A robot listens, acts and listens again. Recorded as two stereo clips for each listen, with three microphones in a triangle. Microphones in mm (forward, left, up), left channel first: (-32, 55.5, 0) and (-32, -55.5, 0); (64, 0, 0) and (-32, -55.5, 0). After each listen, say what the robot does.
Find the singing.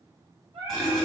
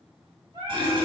Turn 100° right.
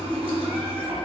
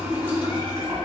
Keep listening.
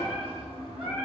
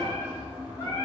Found it: singing, straight ahead, 1 to 2 m away.